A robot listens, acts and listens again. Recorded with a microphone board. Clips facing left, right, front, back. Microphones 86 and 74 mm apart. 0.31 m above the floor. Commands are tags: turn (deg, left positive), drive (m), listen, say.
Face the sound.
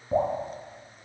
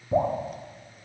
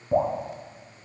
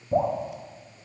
<turn deg="30"/>
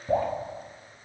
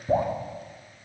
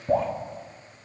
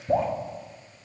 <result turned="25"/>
<say>Facing the dripping.</say>